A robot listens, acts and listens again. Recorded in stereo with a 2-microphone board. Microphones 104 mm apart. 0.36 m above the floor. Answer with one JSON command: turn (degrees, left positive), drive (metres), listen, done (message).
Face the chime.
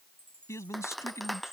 {"turn": -55}
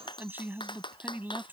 {"listen": true}
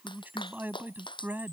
{"listen": true}
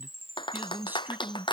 {"turn": -75}
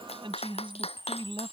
{"turn": -25}
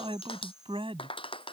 {"done": "Found it: a chime, straight ahead."}